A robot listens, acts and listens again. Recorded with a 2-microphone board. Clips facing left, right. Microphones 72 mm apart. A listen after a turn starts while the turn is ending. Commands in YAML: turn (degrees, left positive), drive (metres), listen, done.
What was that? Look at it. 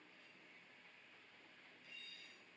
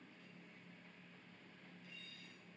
listen: true
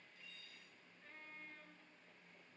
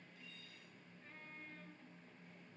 listen: true
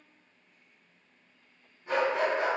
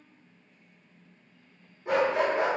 turn: -70
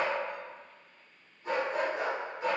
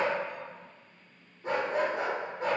turn: -40
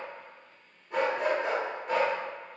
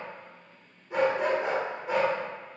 turn: -10
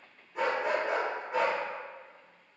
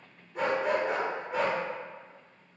done: "Found it: a dog barking, straight ahead, under 1 m away."